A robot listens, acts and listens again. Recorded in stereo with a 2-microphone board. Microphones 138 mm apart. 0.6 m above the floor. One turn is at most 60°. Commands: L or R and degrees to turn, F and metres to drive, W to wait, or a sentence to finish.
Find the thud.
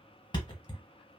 L35
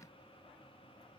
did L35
W
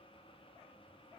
I heard a thud, but can't make it out now. It was about straight ahead or 110° left.